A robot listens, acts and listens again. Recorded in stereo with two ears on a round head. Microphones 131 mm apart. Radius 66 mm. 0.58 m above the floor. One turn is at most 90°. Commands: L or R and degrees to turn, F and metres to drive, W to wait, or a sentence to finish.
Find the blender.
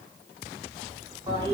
W
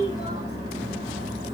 W
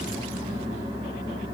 I can't make out a blender to turn to.